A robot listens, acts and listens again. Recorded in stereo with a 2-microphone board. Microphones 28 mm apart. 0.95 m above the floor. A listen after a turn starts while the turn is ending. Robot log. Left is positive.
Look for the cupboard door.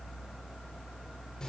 cmd idle
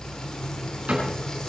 note: The cupboard door: about 70° right or 110° right.
cmd yaw -70
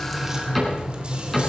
end: Found it: a cupboard door, straight ahead.